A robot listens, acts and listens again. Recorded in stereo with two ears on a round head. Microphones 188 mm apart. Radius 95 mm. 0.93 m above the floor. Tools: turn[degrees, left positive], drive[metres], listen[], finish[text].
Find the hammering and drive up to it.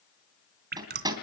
Thought: The hammering: about 20° right or 160° right.
Action: turn[-20]
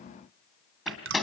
Action: drive[1.0]
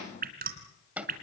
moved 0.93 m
Action: drive[1.0]
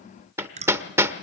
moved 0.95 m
Thought: The hammering is now 15° right.
Action: turn[-15]
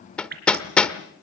Action: drive[1.0]
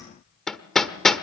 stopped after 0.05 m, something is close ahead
Action: finish[Arrived at the hammering, straight ahead.]